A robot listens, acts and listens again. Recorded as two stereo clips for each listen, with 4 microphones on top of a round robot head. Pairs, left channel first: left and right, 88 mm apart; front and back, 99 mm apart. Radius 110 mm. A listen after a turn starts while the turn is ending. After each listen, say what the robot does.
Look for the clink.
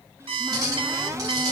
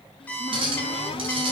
Turn 145° right.
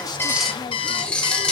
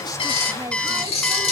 Turn 10° left.
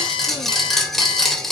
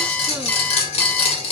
Facing the clink, 2 to 4 m away.